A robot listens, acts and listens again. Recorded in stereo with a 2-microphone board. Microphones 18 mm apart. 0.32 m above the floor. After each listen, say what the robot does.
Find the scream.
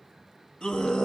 Turn 65° left.
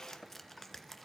Keep listening.
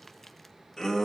Turn 30° left.
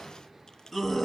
Found it: a scream, straight ahead.